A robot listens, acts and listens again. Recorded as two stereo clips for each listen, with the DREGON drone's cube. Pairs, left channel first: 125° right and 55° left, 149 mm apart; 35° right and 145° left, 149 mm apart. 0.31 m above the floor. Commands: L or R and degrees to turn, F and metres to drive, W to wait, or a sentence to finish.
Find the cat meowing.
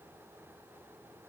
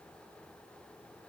W
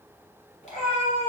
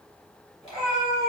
R80
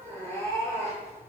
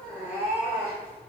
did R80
L10
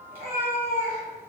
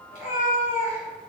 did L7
Found it: a cat meowing, straight ahead.